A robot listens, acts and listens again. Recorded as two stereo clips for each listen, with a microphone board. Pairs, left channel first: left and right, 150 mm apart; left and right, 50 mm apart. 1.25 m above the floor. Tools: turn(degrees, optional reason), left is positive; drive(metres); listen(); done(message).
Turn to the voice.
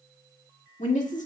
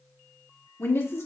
turn(degrees=55, reason="The woman speaking: about 55° left or 125° left.")
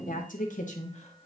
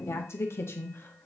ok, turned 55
turn(degrees=50, reason="So it is at 50° left.")
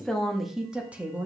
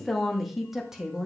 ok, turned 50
turn(degrees=-15, reason="The woman speaking is now 15° right.")
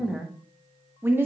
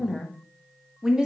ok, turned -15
turn(degrees=-15, reason="The woman speaking is now 15° right.")
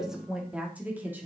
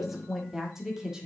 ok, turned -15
turn(degrees=-10, reason="The woman speaking is now 10° right.")
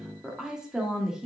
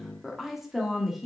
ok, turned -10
done("Found it: a woman speaking, straight ahead.")